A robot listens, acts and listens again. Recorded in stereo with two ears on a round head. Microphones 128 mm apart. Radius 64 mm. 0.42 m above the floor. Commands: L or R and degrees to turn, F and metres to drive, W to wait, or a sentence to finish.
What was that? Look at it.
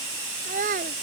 R55
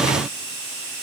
W
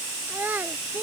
R10
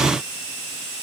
W
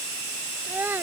R15
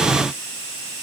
W
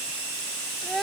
Facing the child speaking.